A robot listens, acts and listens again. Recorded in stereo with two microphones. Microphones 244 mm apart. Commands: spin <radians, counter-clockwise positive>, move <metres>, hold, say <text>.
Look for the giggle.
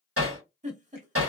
spin -0.52
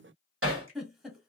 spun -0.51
say Facing the giggle, under 1 m away.